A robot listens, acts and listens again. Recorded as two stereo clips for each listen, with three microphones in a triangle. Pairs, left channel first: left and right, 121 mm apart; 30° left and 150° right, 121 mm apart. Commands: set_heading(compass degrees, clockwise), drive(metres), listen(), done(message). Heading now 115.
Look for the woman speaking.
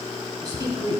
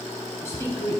set_heading(150)
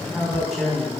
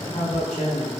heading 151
done("Found it: a woman speaking, straight ahead.")